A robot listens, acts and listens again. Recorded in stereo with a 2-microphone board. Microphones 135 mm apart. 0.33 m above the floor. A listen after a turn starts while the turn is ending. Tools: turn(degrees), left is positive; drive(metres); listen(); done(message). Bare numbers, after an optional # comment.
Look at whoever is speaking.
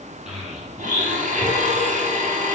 turn(30)
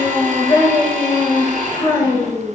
# So it is at 155° left.
turn(155)
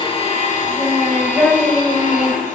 done("Facing the child speaking, 2 to 4 m away.")